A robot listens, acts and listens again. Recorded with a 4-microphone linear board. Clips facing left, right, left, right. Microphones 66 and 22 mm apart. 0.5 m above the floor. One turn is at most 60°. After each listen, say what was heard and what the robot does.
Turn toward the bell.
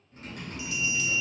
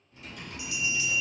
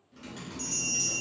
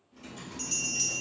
The bell: about 25° right or 155° right. Turn 25° right.
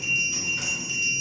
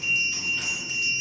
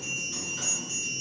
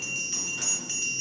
So it is at 130° right. Turn 60° right.
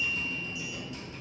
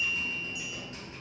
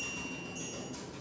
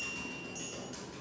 Nothing new. It was at 70° right. Turn 60° right.
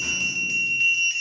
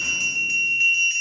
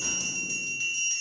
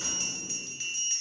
The bell is now 10° right. Turn 10° right.
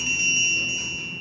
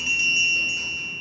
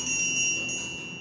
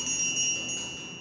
Found it: a bell, straight ahead.